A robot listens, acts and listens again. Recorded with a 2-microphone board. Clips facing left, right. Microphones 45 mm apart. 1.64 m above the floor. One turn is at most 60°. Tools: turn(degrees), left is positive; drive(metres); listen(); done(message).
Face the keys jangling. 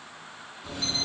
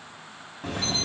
turn(degrees=-60)
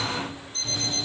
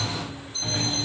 turn(degrees=-45)
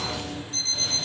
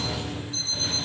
turn(degrees=-15)
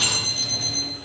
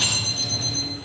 done("Facing the keys jangling, over 4 m away.")